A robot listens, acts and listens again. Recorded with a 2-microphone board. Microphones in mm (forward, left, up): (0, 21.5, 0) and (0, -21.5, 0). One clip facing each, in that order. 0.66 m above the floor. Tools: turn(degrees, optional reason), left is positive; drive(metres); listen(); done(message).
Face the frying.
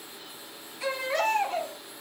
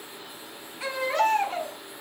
listen()
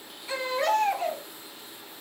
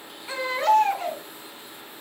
listen()
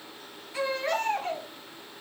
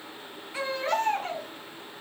done("I can't make out frying to turn to.")